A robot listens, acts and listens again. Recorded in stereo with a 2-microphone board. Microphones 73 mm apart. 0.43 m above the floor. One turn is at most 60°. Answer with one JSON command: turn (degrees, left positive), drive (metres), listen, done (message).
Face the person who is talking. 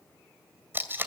{"listen": true}
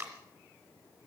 {"listen": true}
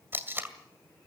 {"done": "I can't make out anyone speaking to turn to."}